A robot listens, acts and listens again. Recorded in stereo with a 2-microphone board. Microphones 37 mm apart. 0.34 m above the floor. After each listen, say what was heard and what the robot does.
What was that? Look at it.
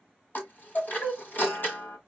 The chime: about 50° left or 130° left. Turn 50° left.
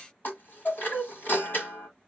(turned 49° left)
So it is at 70° left. Turn 70° left.
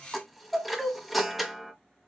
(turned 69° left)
Found it: a chime, straight ahead, 1 to 2 m away.